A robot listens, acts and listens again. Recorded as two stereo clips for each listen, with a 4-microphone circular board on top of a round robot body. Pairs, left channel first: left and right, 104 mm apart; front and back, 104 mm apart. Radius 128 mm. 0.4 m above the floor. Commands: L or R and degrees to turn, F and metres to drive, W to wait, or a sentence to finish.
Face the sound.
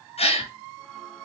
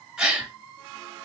L95
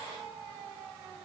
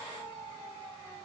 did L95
Facing where the gasp came from. I can't hear it now.